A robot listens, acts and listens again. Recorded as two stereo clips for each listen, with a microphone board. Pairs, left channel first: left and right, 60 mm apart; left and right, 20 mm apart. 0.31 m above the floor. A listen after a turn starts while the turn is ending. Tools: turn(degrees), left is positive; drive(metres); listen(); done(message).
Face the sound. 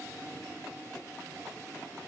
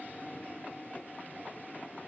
listen()
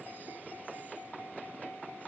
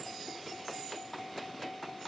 listen()
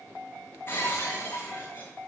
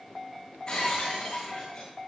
turn(degrees=35)
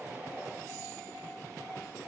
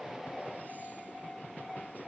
listen()
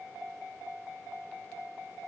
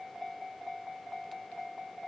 done("I heard breaking glass, but can't make it out now. It was about straight ahead or 110° left.")